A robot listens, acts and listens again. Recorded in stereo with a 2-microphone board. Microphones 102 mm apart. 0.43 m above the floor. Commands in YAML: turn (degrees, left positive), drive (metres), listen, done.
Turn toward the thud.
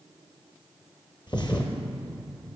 turn: 50
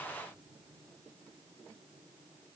listen: true
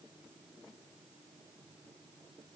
done: "I heard a thud, but can't make it out now. It was about straight ahead or 80° left."